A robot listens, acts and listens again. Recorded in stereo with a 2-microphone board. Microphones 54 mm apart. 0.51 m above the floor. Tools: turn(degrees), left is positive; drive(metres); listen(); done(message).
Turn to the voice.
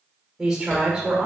turn(degrees=-30)
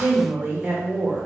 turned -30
turn(degrees=-140)
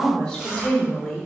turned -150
turn(degrees=10)
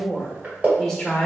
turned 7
done("Found it: a woman speaking, straight ahead.")